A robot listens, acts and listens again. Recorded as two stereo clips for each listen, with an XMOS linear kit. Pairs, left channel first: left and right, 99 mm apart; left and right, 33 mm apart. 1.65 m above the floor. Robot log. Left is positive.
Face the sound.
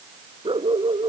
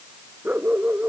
note: The dog barking: about 60° right or 120° right.
cmd yaw -60
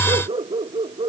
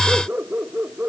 note: So it is at 60° right.
cmd yaw -60
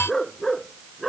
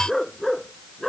end: Facing the dog barking.